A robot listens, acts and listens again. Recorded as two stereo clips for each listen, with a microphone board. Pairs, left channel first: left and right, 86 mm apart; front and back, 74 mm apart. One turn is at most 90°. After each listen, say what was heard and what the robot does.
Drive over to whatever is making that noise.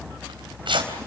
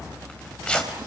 The tearing paper: 75° right. Turn 75° right.
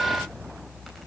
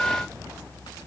Keep listening.
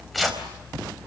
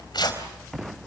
Drive 1.0 m forward.
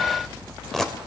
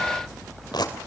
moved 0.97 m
Drive 1.0 m forward.
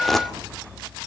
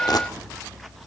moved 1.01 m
Keep listening.
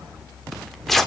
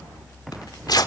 Drive 1.0 m forward.
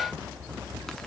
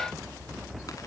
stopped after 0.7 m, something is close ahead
Keep listening.
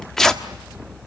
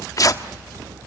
The tearing paper is now 10° left. Turn 10° left.
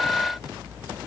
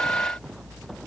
Keep listening.
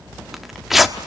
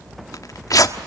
Arrived at the tearing paper, straight ahead.